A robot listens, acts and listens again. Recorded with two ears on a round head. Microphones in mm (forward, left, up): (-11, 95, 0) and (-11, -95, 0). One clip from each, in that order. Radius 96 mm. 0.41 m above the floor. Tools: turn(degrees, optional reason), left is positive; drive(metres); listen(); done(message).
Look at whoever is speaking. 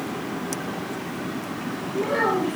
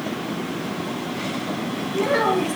turn(degrees=-60, reason="The child speaking: about 60° right or 120° right.")
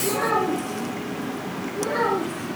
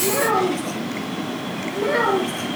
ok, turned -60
turn(degrees=-55, reason="So it is at 55° right.")
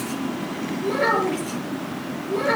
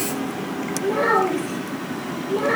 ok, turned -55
turn(degrees=20, reason="The child speaking is now 20° left.")
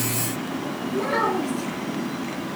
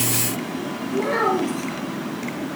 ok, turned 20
done("Facing the child speaking, over 4 m away.")